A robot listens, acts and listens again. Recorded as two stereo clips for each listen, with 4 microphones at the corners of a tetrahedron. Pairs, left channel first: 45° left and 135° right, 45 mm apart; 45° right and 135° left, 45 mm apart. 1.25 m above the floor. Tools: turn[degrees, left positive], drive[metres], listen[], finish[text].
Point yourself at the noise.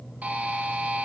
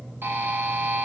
Thought: The buzzer: 170° left.
Action: turn[170]
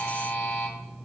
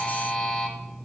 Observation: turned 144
Thought: The buzzer is now 25° left.
Action: turn[25]
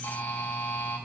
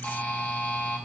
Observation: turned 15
Thought: The buzzer is now 15° left.
Action: turn[15]
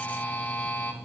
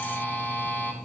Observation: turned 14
Action: finish[Found it: a buzzer, straight ahead.]